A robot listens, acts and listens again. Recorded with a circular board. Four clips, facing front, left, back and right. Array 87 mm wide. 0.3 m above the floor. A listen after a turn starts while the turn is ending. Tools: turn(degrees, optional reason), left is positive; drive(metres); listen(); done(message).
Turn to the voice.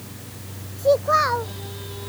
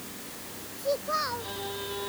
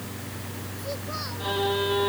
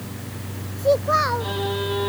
turn(degrees=-30, reason="The child speaking: 30° right.")
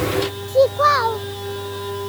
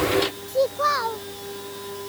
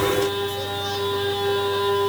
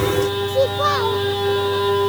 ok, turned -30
done("Found it: a child speaking, straight ahead.")